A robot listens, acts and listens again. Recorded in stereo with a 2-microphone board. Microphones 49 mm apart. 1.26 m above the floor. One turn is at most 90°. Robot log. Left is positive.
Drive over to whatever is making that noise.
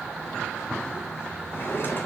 note: The drawer: about 45° left or 135° left.
cmd yaw +45
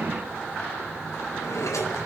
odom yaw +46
note: So it is at 90° left.
cmd yaw +90
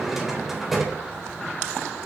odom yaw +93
cmd fwd 1.0
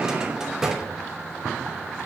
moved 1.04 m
note: The drawer is now 15° right.
cmd yaw -15
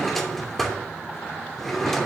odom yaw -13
cmd fwd 1.0
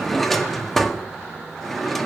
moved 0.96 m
cmd fwd 1.0
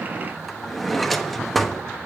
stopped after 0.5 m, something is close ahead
end: Arrived at the drawer, straight ahead.